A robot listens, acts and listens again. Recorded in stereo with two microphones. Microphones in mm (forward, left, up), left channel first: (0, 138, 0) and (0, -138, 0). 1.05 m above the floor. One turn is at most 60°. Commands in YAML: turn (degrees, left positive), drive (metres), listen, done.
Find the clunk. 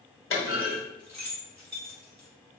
turn: 45
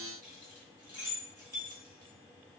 listen: true
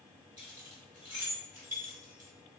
done: "I heard a clunk, but can't make it out now. It was about straight ahead or 90° left."